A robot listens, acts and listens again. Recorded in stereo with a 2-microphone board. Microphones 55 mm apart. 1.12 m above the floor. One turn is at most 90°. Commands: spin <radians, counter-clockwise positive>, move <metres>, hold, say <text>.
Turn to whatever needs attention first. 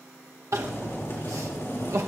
spin -1.13
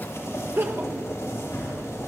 spin -0.87
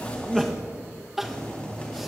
say Facing the crying.